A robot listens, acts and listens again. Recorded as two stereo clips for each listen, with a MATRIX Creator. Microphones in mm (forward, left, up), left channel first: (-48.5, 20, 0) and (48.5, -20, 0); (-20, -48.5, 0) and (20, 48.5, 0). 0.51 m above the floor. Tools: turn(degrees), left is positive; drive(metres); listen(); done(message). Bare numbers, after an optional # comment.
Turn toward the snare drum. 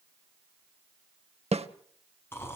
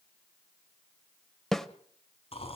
# The snare drum: 25° right.
turn(-25)
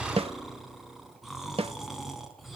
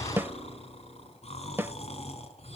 done("Facing the snare drum, under 1 m away.")